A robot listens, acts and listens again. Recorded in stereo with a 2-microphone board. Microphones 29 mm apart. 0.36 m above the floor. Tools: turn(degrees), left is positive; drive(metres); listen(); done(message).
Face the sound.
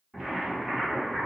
turn(degrees=30)
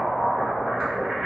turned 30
turn(degrees=-30)
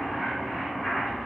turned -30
done("Found it: boiling, straight ahead, 1 to 2 m away.")